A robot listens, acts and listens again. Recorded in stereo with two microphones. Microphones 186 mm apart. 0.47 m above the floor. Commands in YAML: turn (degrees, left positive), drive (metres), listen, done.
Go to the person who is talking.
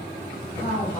turn: 35
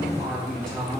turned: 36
drive: 1.0
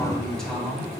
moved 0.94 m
drive: 1.0
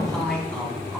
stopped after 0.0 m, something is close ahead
done: "I am next to the man speaking."